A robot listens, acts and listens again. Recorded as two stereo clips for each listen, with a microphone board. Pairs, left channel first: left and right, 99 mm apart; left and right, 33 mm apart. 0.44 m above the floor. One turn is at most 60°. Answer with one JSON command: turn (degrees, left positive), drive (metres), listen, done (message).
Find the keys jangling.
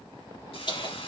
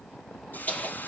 {"turn": 45}
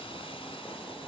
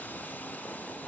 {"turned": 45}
{"listen": true}
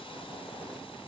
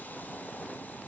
{"listen": true}
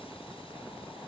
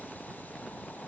{"done": "I heard keys jangling, but can't make it out now. It was about straight ahead or 90° left."}